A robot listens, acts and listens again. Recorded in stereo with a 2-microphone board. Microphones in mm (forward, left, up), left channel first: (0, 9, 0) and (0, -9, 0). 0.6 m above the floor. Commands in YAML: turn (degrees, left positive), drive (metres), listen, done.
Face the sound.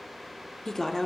turn: 30
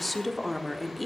done: "Found it: a woman speaking, straight ahead, 1 to 2 m away."